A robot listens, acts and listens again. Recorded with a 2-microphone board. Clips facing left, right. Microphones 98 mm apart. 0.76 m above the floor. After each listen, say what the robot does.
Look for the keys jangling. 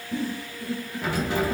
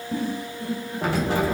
Turn 60° right.
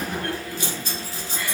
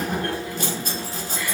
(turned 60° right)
Turn 55° right.
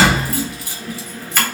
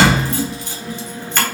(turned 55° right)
Found it: keys jangling, straight ahead.